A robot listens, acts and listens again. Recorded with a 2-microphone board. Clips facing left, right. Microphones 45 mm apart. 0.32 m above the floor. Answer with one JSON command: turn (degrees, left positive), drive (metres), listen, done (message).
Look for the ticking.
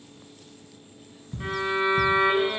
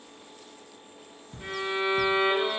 {"turn": 15}
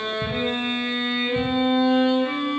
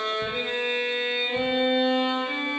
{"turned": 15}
{"listen": true}
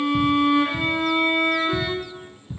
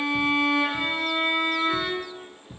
{"done": "Found it: ticking, straight ahead, 1 to 2 m away."}